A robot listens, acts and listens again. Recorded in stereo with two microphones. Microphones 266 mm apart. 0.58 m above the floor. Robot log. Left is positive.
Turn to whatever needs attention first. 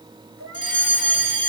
cmd yaw +30
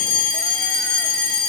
note: So it is at 145° left.
cmd yaw +145
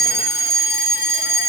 end: Facing the fire alarm, over 4 m away.